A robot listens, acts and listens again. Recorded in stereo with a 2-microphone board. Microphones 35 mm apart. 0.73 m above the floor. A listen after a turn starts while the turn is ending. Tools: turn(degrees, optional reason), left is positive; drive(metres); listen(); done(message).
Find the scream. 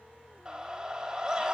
turn(degrees=-30, reason="The scream: about 30° right or 150° right.")
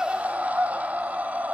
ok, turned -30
turn(degrees=-120, reason="So it is at 120° right.")
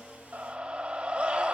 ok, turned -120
turn(degrees=-30, reason="The scream is now 30° right.")
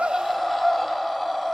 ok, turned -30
turn(degrees=10, reason="The scream is now 10° left.")
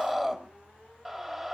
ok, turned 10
done("Facing the scream, 2 to 4 m away.")